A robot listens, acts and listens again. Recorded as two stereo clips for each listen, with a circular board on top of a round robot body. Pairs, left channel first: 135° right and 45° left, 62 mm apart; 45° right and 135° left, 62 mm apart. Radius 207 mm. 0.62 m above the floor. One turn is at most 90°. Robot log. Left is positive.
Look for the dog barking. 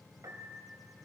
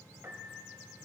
cmd idle
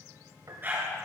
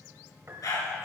note: The dog barking: 15° right.
cmd yaw -15
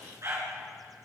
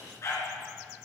end: Facing the dog barking.